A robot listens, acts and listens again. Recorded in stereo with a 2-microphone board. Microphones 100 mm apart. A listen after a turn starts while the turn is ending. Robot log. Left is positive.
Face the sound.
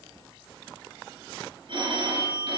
note: The phone ringing: about 55° right or 125° right.
cmd yaw -55
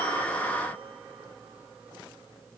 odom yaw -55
cmd idle
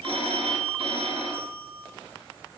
note: So it is at 70° right.
cmd yaw -70
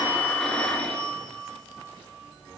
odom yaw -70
note: The phone ringing is now 10° left.
cmd yaw +10
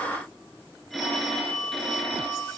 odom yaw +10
end: Facing the phone ringing.